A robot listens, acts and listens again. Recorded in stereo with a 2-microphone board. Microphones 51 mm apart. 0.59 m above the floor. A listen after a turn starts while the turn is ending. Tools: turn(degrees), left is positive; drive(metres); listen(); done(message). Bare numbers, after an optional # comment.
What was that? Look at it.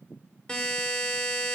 # The buzzer: about 15° left or 165° left.
turn(15)
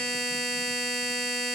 done("Facing the buzzer.")